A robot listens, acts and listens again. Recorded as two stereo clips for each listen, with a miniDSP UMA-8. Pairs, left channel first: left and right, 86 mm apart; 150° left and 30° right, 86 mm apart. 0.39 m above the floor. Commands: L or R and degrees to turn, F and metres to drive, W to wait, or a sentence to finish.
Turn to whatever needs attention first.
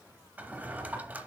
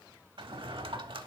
W
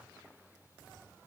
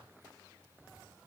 W
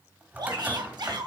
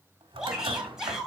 R110
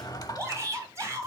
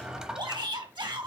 R40
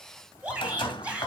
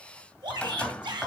R15
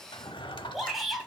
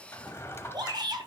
Facing the shout.